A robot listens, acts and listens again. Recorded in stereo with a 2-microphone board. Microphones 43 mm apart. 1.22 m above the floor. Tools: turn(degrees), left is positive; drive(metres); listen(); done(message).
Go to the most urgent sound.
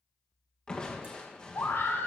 turn(degrees=70)
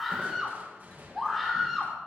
drive(metres=1.0)
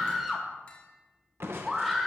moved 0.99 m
drive(metres=1.0)
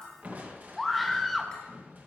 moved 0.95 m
drive(metres=1.0)
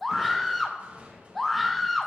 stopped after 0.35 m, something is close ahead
done("Arrived at the scream, straight ahead.")